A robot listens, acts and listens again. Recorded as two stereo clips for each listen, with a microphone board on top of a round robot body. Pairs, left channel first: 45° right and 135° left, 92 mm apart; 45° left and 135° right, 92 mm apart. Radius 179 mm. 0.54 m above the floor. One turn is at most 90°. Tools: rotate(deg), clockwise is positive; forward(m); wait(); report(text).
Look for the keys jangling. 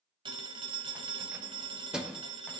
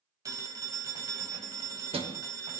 rotate(90)
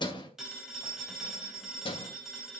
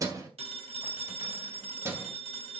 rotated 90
rotate(70)
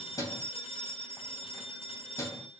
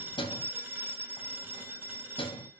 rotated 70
rotate(-15)
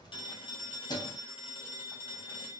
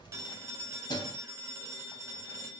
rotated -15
report("Found it: keys jangling, straight ahead, 2 to 4 m away.")